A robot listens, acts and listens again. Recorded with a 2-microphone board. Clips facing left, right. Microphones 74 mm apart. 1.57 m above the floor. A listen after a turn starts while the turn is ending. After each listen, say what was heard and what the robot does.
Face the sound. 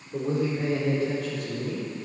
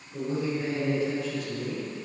The man speaking: about 55° left or 125° left. Turn 55° left.
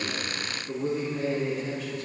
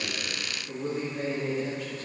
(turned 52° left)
So it is at 10° right. Turn 10° right.
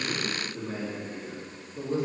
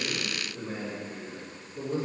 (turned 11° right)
Facing the man speaking, 2 to 4 m away.